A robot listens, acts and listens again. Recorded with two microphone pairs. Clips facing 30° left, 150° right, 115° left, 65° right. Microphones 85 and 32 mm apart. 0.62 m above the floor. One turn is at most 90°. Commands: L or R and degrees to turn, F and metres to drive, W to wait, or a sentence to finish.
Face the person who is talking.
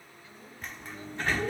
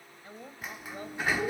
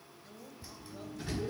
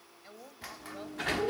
R90
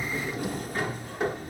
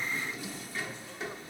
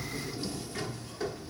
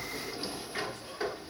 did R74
R45
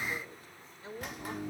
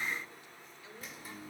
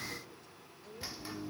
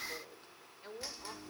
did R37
R20
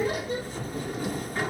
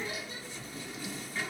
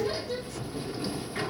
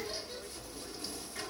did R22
W
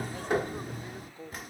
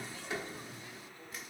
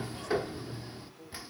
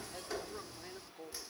R15
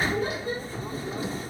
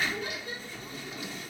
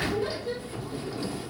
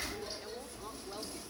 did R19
W
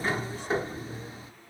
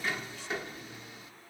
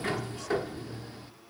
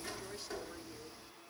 W
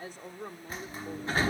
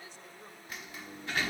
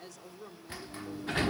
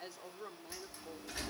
Facing the woman speaking, 1 to 2 m away.